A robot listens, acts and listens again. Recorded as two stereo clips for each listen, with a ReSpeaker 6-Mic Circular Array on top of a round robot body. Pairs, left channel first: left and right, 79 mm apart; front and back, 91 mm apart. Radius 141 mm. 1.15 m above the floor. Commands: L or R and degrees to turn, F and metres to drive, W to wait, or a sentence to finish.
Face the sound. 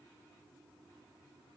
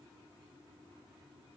W
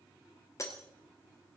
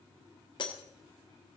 L40
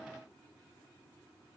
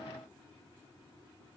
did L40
Facing where the breaking glass came from. I can't hear it now.